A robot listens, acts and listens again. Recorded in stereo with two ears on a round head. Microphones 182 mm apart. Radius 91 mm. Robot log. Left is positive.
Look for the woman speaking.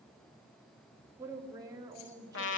note: The woman speaking: about 20° right or 160° right.
cmd yaw -20
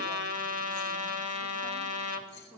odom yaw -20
cmd yaw -30
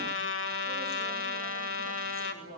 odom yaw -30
note: So it is at 10° left.
cmd yaw +10
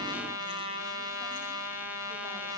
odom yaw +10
cmd idle
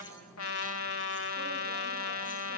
cmd idle
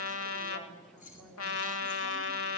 end: Facing where the woman speaking came from. I can't hear it now.